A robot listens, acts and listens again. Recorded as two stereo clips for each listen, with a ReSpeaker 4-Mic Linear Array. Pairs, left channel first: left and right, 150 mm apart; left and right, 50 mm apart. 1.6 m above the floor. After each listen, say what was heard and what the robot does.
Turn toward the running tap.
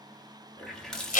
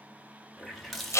Turn 30° left.
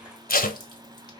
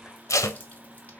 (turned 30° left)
Keep listening.
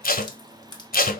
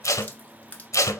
So it is at 145° left. Turn 145° left.
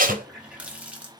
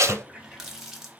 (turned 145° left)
The running tap is now 10° right. Turn 10° right.
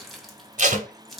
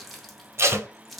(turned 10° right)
Facing the running tap, 1 to 2 m away.